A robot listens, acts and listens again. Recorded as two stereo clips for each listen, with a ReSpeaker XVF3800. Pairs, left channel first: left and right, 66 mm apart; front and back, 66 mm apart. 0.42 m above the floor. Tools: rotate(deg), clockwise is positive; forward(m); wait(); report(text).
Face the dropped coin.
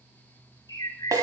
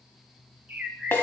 wait()
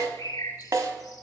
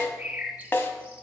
wait()
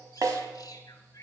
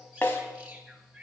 report("I can't make out a dropped coin, only a snare drum and a bird.")